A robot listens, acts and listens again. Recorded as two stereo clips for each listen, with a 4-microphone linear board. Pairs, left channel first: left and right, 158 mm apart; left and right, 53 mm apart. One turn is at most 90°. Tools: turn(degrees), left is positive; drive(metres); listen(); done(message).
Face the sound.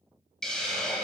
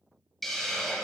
turn(degrees=30)
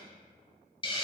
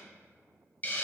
turn(degrees=90)
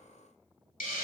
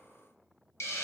turn(degrees=70)
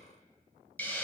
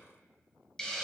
turn(degrees=10)
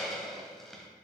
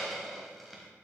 done("Found it: a hiss, straight ahead, 1 to 2 m away.")